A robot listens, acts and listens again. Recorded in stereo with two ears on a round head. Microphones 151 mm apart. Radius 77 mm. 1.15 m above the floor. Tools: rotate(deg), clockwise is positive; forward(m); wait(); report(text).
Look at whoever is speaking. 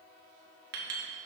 wait()
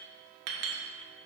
wait()
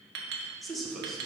rotate(-30)
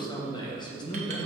rotate(-150)
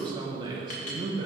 rotate(25)
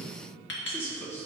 rotate(-15)
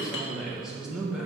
report("Facing the man speaking, 1 to 2 m away.")